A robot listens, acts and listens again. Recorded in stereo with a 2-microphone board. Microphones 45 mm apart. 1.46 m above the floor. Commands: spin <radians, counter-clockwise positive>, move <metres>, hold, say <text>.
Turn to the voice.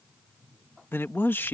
spin 0.87
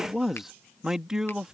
spin -0.26
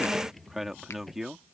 say Found it: a man speaking, straight ahead.